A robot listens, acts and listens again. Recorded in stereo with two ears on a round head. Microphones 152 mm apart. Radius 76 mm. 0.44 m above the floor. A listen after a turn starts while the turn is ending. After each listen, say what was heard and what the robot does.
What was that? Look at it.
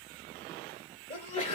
The sneeze: about 35° left or 145° left. Turn 35° left.
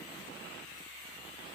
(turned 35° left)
Keep listening.
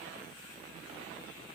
I heard a sneeze, but can't make it out now. It was about straight ahead or 110° left.